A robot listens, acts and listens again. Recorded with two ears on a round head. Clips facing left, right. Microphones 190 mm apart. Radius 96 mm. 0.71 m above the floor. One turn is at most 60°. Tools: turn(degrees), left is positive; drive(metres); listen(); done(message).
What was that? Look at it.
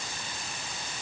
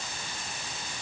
listen()
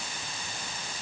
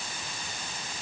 listen()
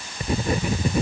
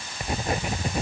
turn(degrees=60)
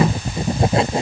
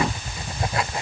turn(degrees=20)
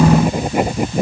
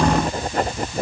turn(degrees=10)
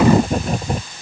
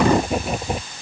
done("Found it: writing, straight ahead.")